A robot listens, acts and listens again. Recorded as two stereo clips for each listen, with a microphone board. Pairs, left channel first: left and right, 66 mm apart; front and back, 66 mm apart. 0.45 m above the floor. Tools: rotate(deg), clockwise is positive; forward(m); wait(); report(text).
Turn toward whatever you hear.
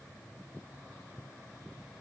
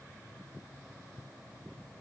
wait()
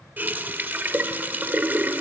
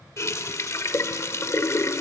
rotate(30)
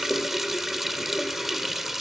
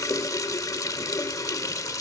report("Found it: a running tap, straight ahead, under 1 m away.")